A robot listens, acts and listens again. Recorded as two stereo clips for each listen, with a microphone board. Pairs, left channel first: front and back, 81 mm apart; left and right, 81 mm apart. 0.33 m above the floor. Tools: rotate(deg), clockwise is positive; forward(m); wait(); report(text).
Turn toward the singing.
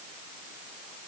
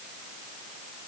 wait()
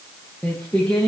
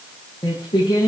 rotate(-80)
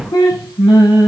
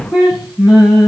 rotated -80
rotate(15)
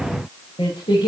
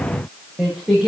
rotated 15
report("Found it: singing, straight ahead.")